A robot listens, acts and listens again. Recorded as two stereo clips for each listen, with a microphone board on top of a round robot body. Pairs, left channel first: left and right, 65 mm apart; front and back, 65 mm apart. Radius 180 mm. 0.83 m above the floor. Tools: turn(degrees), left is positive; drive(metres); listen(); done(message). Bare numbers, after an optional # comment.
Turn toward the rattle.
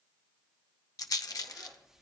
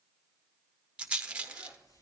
# The rattle: 110° left.
turn(110)
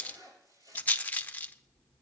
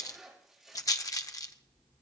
# The rattle is now 25° left.
turn(25)
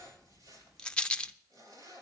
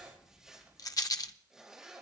# The rattle is now 15° left.
turn(15)
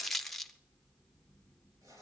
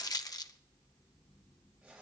done("Found it: a rattle, straight ahead, under 1 m away.")